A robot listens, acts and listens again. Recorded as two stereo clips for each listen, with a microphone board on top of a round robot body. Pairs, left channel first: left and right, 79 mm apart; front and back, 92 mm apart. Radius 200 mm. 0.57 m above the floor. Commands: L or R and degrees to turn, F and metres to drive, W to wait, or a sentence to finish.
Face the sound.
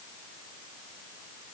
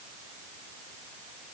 W
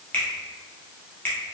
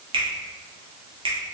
L160
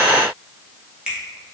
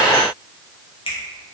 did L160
R10
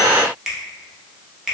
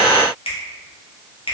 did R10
Facing the finger snap, 1 to 2 m away.